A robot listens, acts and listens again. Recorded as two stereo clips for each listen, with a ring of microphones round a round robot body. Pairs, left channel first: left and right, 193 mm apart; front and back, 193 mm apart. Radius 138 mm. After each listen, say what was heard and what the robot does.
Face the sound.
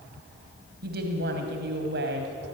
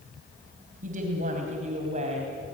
The woman speaking: 120° right. Turn 120° right.
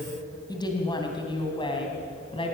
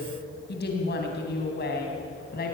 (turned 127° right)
The woman speaking is now 30° left. Turn 30° left.
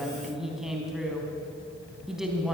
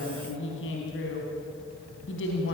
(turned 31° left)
Found it: a woman speaking, straight ahead, 2 to 4 m away.